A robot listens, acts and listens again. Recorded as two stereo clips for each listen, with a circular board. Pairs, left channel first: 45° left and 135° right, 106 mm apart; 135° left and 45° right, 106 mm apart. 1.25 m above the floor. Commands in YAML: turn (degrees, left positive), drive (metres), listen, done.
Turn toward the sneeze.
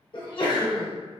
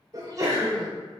turn: 10
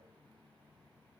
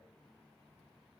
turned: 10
done: "Facing where the sneeze came from. I can't hear it now."